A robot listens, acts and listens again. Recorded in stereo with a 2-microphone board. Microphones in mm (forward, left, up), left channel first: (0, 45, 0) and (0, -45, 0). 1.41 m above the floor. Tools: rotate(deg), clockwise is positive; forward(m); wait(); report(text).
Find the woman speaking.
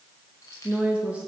rotate(15)
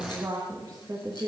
rotate(130)
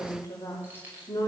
rotate(-45)
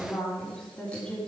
rotate(-15)
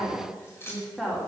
report("Found it: a woman speaking, straight ahead, 2 to 4 m away.")